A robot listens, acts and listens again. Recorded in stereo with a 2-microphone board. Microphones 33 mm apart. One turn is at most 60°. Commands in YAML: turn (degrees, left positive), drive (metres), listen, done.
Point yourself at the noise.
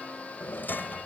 turn: 60
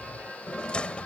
turn: 35
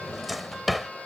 done: "Found it: a drawer, straight ahead."